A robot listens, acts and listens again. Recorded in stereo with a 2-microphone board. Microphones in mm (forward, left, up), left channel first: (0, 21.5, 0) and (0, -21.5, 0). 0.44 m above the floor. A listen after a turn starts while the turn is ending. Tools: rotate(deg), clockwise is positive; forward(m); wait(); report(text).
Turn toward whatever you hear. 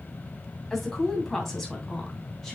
rotate(-30)
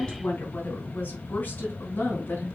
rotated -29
rotate(-140)
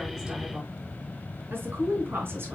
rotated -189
rotate(55)
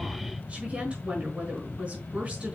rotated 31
rotate(25)
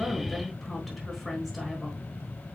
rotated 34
rotate(-10)
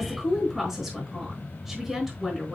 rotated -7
report("Found it: a woman speaking, straight ahead, over 4 m away.")